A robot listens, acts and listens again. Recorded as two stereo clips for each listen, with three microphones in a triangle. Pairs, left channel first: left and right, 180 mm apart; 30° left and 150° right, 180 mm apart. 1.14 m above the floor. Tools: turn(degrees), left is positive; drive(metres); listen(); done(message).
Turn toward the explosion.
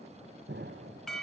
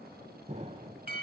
turn(degrees=-95)
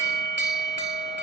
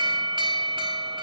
done("I heard an explosion from this way, but can't make it out now.")